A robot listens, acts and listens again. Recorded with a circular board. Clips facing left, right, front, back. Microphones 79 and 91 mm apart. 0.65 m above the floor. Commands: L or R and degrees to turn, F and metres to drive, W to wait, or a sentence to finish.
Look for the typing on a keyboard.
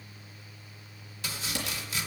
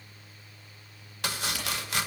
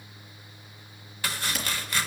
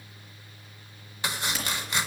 L90
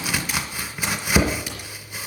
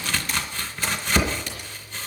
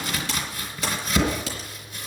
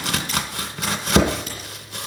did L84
L10
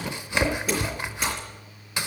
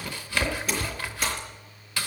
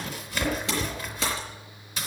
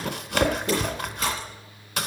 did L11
W
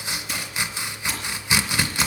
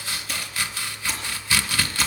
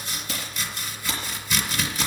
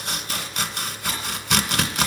W
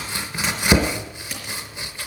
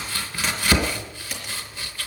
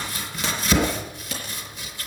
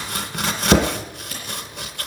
Found it: typing on a keyboard, straight ahead, over 4 m away.